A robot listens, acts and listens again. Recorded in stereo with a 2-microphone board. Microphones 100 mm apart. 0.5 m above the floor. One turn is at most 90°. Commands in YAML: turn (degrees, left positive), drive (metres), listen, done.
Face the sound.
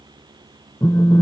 turn: 40
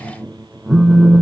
done: "Found it: a phone buzzing, straight ahead."